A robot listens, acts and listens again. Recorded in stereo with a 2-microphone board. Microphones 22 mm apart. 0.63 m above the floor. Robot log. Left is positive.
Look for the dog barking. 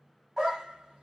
note: The dog barking: about 25° right or 155° right.
cmd yaw -25
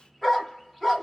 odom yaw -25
end: Found it: a dog barking, straight ahead.